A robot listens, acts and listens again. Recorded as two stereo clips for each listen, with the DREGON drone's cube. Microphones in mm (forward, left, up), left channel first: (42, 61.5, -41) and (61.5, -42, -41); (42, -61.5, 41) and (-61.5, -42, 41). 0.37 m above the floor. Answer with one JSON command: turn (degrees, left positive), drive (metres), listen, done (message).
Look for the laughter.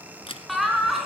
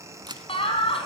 {"done": "Found it: laughter, straight ahead."}